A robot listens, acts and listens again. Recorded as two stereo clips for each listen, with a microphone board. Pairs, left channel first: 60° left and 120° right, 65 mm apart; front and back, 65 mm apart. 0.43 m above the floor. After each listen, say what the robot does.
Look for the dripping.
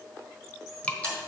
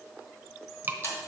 Turn 130° left.
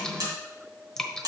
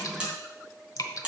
Turn 20° right.
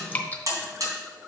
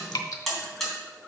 Found it: dripping, straight ahead, 1 to 2 m away.